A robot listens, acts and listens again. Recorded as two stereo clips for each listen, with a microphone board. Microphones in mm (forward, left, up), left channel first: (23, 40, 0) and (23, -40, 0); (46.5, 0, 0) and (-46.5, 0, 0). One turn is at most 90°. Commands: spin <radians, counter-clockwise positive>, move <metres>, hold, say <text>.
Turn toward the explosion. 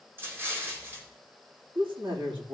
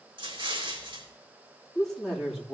spin -1.57
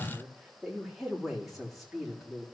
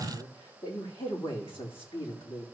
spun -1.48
spin -1.13
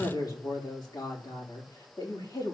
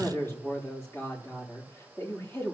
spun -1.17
say I heard an explosion from this way, but can't make it out now.